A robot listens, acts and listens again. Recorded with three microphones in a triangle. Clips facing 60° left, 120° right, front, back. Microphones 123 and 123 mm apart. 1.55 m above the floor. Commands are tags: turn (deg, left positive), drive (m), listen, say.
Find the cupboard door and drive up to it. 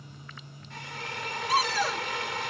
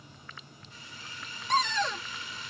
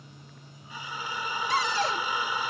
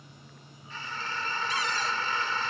<turn deg="-25"/>
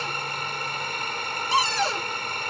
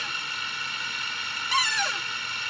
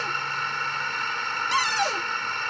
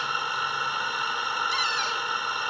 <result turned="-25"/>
<drive m="1.0"/>
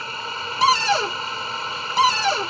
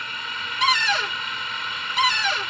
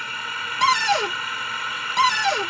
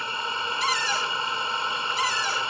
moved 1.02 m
<drive m="1.0"/>
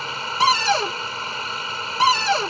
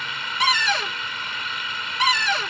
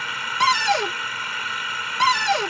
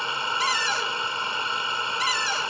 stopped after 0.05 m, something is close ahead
<say>I am next to the cupboard door.</say>